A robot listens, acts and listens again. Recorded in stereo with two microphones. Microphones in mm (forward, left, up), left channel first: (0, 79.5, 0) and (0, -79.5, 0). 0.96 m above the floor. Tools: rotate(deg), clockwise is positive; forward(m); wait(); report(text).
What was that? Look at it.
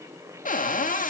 rotate(-55)
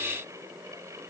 wait()
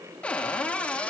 rotate(-10)
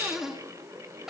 report("Facing the cupboard door.")